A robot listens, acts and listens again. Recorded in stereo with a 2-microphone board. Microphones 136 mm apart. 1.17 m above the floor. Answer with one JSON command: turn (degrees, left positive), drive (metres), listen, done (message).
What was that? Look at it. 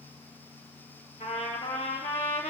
{"turn": 65}
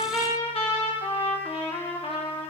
{"turn": 45}
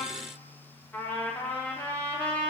{"turn": 15}
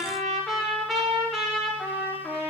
{"done": "Facing the trumpet, 2 to 4 m away."}